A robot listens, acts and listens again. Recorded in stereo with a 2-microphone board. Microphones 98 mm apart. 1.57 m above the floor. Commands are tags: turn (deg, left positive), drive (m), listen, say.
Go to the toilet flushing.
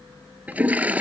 <turn deg="-15"/>
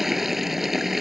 <drive m="1.0"/>
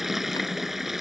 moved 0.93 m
<drive m="1.0"/>
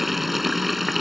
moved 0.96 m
<drive m="1.0"/>
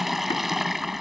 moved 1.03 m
<drive m="1.0"/>
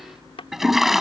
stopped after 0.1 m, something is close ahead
<say>Arrived at the toilet flushing, straight ahead.</say>